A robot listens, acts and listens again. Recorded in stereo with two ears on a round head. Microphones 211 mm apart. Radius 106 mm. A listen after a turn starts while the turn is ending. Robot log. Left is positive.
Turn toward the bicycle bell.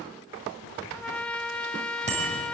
note: The bicycle bell: about 30° right or 150° right.
cmd yaw -30
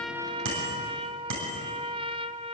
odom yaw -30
note: So it is at 120° right.
cmd yaw -120
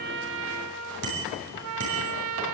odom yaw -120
note: The bicycle bell is now 55° right.
cmd yaw -55
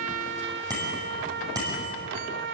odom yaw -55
note: The bicycle bell is now 15° right.
cmd yaw -15
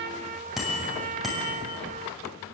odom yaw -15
end: Facing the bicycle bell.